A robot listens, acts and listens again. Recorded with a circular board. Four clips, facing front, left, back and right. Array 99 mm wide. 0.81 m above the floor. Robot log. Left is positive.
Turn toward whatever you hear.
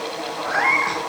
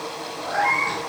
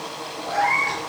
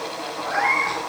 note: The cat meowing: 15° right.
cmd yaw -15
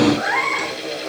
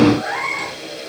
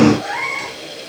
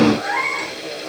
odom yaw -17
end: Found it: a cat meowing, straight ahead, over 4 m away.